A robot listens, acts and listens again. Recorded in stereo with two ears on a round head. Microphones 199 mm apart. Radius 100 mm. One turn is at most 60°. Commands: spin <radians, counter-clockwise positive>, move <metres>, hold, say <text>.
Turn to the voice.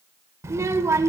spin -0.52
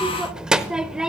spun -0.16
spin -0.52
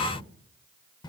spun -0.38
spin 0.35
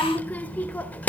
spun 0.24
spin 0.17
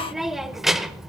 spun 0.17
say Found it: a child speaking, straight ahead, under 1 m away.